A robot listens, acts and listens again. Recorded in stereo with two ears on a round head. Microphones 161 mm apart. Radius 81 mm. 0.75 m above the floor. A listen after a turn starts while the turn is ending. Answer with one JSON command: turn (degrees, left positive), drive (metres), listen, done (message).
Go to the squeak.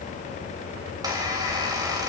{"turn": -20}
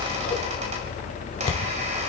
{"listen": true}
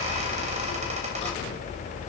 {"listen": true}
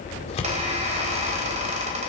{"turn": -140}
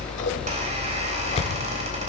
{"listen": true}
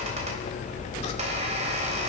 {"turn": -35}
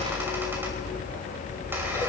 {"listen": true}
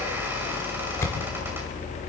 {"listen": true}
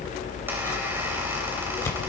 {"done": "I heard a squeak from this way, but can't make it out now. I did not reach it."}